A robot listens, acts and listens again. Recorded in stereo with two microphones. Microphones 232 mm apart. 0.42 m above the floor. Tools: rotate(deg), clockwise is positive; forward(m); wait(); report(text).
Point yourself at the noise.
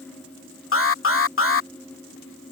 rotate(-65)
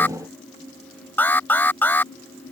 rotate(-10)
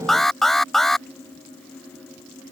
report("Facing the alarm.")